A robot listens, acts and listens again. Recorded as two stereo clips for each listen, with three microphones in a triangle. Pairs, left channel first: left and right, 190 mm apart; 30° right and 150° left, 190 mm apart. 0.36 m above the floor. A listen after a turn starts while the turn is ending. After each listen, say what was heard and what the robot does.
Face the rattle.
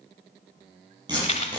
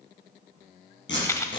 The rattle: 40° left. Turn 40° left.
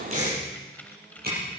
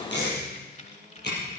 Keep listening.
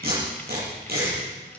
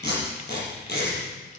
Keep listening.
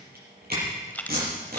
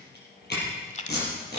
The rattle is now 10° left. Turn 10° left.
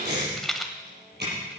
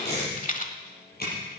Facing the rattle.